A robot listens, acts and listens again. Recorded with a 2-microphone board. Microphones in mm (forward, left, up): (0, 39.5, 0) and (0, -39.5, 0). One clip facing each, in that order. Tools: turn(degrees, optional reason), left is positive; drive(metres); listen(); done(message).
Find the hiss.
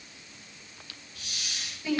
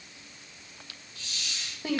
turn(degrees=60, reason="The hiss: about 60° left or 120° left.")
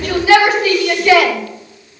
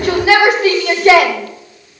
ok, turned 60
listen()
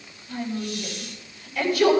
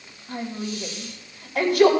listen()
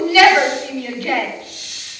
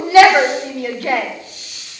turn(degrees=65, reason="So it is at 65° left.")
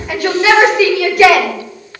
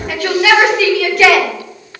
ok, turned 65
listen()
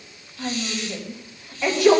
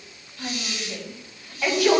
turn(degrees=-10, reason="The hiss is now 10° right.")
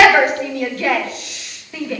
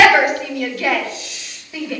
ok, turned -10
done("Facing the hiss, 2 to 4 m away.")